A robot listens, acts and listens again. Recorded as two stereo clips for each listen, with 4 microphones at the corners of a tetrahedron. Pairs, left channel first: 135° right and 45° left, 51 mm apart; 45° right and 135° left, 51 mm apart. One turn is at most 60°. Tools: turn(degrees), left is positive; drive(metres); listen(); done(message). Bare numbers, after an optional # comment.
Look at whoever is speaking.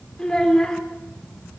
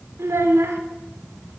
# The child speaking: 150° left.
turn(60)
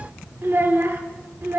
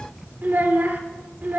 # The child speaking is now 85° left.
turn(60)
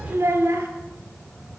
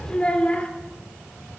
# The child speaking is now 20° left.
turn(20)
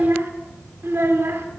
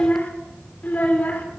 # The child speaking is now 10° left.
turn(10)
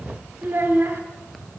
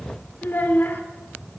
done("Found it: a child speaking, straight ahead.")